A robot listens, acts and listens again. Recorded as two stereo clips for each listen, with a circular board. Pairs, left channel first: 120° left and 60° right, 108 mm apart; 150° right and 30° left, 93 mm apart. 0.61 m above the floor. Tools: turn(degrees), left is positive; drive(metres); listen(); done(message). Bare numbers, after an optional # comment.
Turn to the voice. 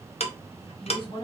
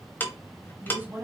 # The woman speaking: 95° left.
turn(95)
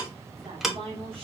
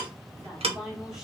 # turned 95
# The woman speaking is now 55° right.
turn(-55)
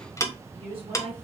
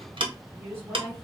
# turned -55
# The woman speaking is now 40° right.
turn(-40)
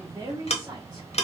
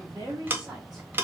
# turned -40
# The woman speaking is now 10° right.
turn(-10)
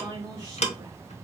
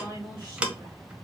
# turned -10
done("Found it: a woman speaking, straight ahead, 2 to 4 m away.")